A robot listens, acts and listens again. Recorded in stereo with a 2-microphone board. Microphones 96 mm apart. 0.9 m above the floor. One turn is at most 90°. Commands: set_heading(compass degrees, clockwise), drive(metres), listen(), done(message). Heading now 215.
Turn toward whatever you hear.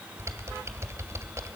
set_heading(245)
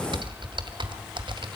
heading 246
set_heading(336)
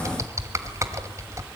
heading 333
set_heading(8)
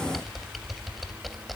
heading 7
done("Found it: typing on a keyboard, straight ahead, 1 to 2 m away.")